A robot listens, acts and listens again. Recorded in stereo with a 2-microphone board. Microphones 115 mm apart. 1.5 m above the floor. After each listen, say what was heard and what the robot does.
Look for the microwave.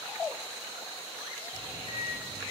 The microwave: about 55° left or 125° left. Turn 55° left.
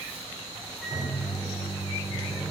Found it: a microwave, straight ahead, 2 to 4 m away.